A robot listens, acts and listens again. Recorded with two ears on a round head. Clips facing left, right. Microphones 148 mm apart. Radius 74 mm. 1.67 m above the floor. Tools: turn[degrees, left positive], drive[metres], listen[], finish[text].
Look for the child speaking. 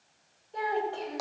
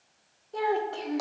Thought: The child speaking: about 65° right or 115° right.
Action: turn[-65]
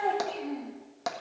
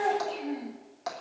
Thought: So it is at 10° right.
Action: turn[-10]
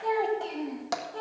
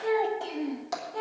Thought: The child speaking is now 10° right.
Action: turn[-10]
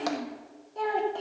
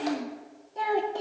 Thought: The child speaking is now 10° right.
Action: turn[-10]
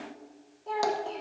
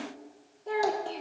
Thought: The child speaking is now 10° right.
Action: turn[-10]
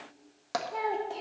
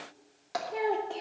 Action: finish[Facing the child speaking.]